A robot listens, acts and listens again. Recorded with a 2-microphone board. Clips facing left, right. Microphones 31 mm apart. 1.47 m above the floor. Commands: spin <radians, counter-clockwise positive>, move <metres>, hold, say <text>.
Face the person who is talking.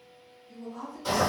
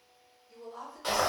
spin -0.52
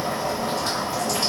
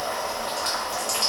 hold
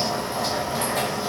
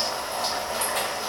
hold
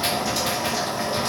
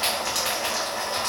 say I heard a woman speaking, but can't make it out now. It was about 20° left or 140° right.